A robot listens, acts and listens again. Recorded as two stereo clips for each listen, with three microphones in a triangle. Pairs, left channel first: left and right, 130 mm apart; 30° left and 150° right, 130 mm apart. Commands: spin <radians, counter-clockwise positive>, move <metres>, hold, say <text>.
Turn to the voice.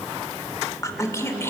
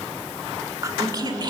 spin 2.79
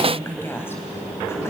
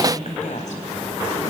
spin 0.35
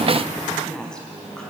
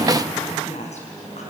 say Facing the woman speaking.